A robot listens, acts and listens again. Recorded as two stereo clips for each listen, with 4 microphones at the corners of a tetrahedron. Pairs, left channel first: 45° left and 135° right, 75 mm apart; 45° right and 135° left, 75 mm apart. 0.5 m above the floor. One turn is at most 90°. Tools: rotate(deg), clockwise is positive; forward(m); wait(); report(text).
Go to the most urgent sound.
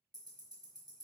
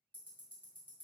wait()
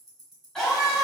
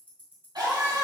rotate(-90)
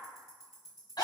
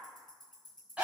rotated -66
rotate(-60)
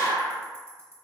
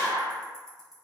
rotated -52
rotate(-10)
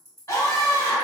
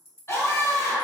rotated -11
forward(1.0)
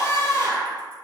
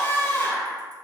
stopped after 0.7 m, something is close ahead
rotate(-10)
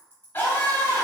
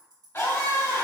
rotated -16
report("Arrived at the scream, straight ahead.")